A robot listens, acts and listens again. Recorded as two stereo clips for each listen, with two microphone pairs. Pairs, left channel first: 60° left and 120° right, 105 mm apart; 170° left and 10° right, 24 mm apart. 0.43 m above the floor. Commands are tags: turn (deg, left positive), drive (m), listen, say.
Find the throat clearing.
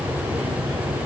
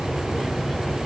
<listen/>
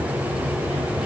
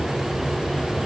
<listen/>
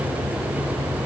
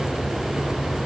<say>I can't make out throat clearing to turn to.</say>